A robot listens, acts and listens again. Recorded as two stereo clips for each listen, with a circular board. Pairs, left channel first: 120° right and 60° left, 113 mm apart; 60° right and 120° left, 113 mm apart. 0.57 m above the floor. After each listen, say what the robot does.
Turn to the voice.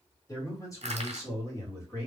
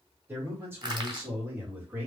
Turn 175° right.
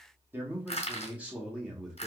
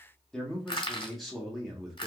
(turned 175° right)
Turn 80° left.
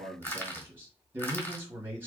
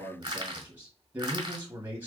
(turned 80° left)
Turn 85° left.
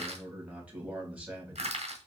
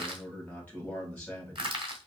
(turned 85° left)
Found it: a man speaking, straight ahead, 1 to 2 m away.